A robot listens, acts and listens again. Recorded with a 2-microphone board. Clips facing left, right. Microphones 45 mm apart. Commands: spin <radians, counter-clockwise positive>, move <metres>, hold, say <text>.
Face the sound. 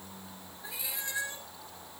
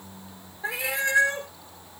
spin -1.57
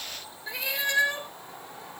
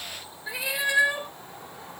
spin -0.17
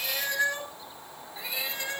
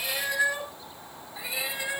spin -0.17
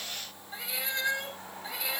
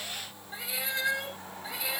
say Facing the cat meowing.